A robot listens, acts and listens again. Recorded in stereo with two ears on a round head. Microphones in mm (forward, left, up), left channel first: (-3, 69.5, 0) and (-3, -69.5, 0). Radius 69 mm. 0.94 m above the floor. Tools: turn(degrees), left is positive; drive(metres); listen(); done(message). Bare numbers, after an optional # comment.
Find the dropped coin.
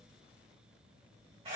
listen()
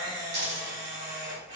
# The dropped coin: about 75° right or 105° right.
turn(-75)
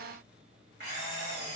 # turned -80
listen()
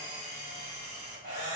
done("I heard a dropped coin, but can't make it out now. It was about 5° left or 25° right.")